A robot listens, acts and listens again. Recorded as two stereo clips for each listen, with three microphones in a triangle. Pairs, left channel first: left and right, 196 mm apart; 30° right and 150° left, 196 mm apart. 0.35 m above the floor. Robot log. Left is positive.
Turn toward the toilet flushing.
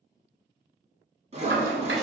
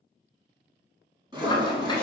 note: The toilet flushing: 100° right.
cmd yaw -100
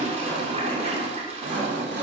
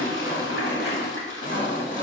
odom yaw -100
note: The toilet flushing is now 35° right.
cmd yaw -35
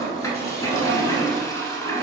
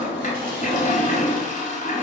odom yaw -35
note: The toilet flushing is now 15° left.
cmd yaw +15
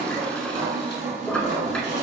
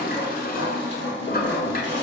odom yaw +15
end: Found it: a toilet flushing, straight ahead, under 1 m away.